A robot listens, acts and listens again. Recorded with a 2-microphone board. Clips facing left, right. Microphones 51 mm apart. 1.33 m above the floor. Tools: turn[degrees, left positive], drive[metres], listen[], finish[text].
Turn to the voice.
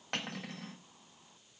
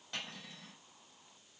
Action: listen[]
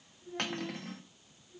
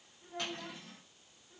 Thought: The child speaking: about 40° right or 140° right.
Action: turn[-40]
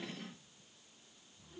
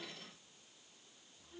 Action: listen[]
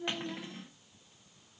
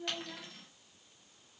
Action: finish[Facing the child speaking.]